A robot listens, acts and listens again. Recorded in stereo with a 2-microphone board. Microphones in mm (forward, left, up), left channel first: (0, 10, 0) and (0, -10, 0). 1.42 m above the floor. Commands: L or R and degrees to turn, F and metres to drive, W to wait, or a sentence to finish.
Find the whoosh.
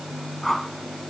L30
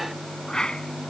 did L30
L140
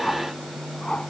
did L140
L60
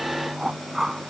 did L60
R10
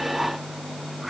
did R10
W
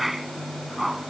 Found it: a whoosh, straight ahead.